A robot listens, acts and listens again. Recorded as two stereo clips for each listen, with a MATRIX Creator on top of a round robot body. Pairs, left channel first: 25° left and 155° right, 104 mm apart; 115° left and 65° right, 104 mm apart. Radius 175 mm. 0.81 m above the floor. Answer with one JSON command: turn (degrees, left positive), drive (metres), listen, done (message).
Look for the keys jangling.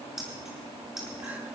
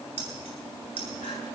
{"turn": -70}
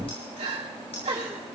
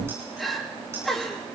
{"listen": true}
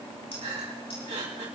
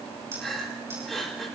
{"done": "Found it: keys jangling, straight ahead, over 4 m away."}